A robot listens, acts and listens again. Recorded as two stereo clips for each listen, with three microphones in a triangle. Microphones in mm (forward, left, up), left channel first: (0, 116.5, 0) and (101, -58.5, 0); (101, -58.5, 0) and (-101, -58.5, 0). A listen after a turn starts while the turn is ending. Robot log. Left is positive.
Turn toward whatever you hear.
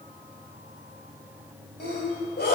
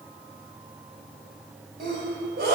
note: The sneeze: 150° left.
cmd yaw +150
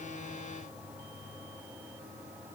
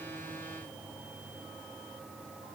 end: I heard a sneeze from this way, but can't make it out now.